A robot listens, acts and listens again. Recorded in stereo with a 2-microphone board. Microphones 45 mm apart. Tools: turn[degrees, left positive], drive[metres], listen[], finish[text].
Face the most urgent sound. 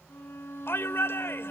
Thought: The shout: about 60° left or 120° left.
Action: turn[60]
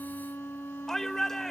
Thought: So it is at 10° left.
Action: turn[10]
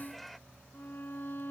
Action: listen[]
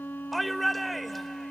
Action: finish[Facing the shout.]